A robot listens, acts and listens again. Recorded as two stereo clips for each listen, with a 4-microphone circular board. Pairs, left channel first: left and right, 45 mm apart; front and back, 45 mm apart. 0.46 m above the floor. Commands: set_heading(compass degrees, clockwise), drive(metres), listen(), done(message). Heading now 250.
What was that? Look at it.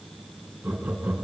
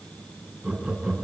set_heading(5)
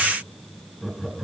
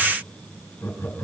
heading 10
done("Found it: laughter, straight ahead, 2 to 4 m away.")